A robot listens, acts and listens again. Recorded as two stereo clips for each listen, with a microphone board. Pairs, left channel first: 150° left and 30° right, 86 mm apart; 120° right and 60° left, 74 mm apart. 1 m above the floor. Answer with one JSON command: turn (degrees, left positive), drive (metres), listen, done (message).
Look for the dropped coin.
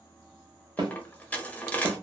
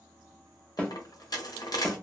{"turn": -140}
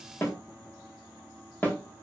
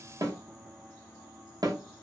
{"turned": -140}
{"done": "I heard a dropped coin from this way, but can't make it out now."}